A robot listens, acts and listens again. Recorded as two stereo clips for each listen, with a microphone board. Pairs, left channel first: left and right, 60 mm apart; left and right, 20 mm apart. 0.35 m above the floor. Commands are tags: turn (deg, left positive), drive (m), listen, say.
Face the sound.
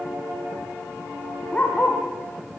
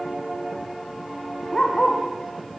<turn deg="25"/>
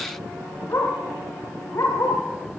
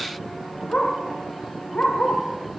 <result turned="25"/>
<turn deg="125"/>
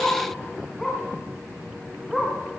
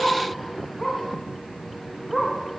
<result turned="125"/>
<say>Facing the dog barking, over 4 m away.</say>